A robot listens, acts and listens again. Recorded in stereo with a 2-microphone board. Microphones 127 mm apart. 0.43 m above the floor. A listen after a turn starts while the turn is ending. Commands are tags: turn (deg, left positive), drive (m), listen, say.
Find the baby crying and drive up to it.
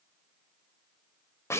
<listen/>
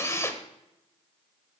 <listen/>
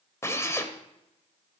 <say>I can't make out a baby crying, only a drill.</say>